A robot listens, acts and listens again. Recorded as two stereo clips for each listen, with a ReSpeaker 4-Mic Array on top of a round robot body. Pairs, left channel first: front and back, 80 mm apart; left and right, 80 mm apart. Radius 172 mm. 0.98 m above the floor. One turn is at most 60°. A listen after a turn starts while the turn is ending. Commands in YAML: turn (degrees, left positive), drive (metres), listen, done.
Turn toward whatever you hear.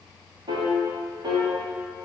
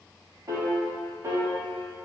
turn: -60
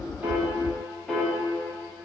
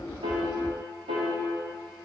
turn: -60
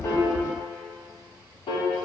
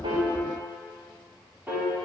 turn: -20
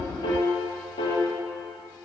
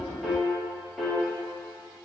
done: "Found it: a piano, straight ahead."